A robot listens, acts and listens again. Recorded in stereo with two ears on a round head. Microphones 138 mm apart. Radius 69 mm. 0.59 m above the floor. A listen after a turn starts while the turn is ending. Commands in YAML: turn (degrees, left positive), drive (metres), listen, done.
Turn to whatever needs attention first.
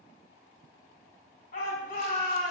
turn: 65
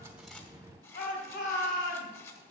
turn: 50
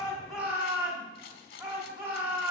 turn: -15
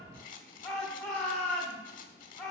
done: "Facing the shout."